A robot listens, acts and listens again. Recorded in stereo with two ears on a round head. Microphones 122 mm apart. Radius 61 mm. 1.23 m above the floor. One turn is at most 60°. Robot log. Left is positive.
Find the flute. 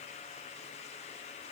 cmd idle
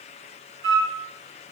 note: The flute: about 45° right or 135° right.
cmd yaw -45
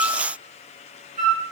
note: So it is at 80° right.
cmd yaw -60
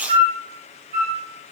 note: The flute is now 50° right.
cmd yaw -50
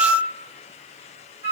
note: The flute is now 20° right.
cmd yaw -20
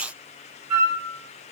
end: Facing the flute.